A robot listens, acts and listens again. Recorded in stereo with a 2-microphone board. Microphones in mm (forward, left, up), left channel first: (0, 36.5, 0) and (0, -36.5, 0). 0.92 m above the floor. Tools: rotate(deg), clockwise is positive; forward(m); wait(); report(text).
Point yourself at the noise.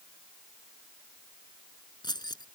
rotate(-75)
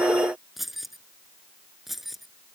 report("Facing the keys jangling.")